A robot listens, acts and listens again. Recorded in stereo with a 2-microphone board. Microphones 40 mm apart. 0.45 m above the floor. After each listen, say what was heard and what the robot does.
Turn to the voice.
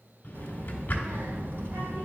The child speaking: about 60° right or 120° right. Turn 60° right.
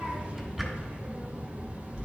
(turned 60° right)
So it is at 35° right. Turn 35° right.
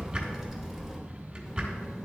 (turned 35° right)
The child speaking is now 10° right. Turn 10° right.
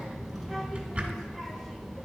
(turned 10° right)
Found it: a child speaking, straight ahead.